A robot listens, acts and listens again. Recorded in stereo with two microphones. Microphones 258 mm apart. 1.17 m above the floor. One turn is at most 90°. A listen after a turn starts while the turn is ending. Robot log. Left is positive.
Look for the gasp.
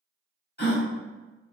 note: The gasp: about 40° left or 140° left.
cmd yaw +40
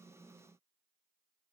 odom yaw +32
cmd idle
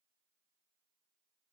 end: I heard a gasp, but can't make it out now. It was about 5° left or 110° left.